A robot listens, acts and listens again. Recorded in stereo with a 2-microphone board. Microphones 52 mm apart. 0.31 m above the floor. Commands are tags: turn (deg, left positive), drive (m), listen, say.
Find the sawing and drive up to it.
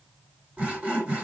<turn deg="-25"/>
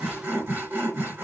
<turn deg="-130"/>
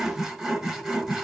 <turn deg="-15"/>
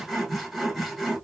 <drive m="1.0"/>
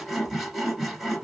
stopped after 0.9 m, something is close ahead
<say>I am next to the sawing.</say>